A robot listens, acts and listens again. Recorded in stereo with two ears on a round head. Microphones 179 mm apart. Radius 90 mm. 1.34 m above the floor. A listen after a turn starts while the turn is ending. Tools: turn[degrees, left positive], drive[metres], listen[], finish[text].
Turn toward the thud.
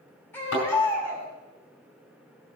Action: turn[90]
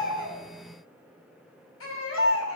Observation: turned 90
Action: finish[I heard a thud from this way, but can't make it out now.]